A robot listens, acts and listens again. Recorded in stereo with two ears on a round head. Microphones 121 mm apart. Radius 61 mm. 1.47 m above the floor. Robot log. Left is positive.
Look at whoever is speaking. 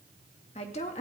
note: The woman speaking: about 50° left or 130° left.
cmd yaw +50
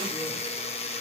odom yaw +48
cmd idle
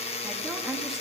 cmd idle
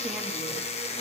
end: I heard a woman speaking, but can't make it out now. It was about straight ahead or 85° left.